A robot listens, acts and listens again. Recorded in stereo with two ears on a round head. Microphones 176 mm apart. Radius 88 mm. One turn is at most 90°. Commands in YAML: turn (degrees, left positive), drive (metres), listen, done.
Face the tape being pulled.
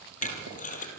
turn: 40
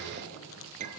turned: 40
turn: 90
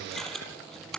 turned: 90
done: "Facing the tape being pulled."